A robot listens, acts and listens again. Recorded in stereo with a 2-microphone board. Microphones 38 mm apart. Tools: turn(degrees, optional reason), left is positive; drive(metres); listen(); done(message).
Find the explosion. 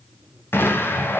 turn(degrees=75, reason="The explosion: about 75° left or 105° left.")
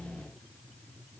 listen()
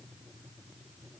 done("I heard an explosion, but can't make it out now. It was about straight ahead or 30° left.")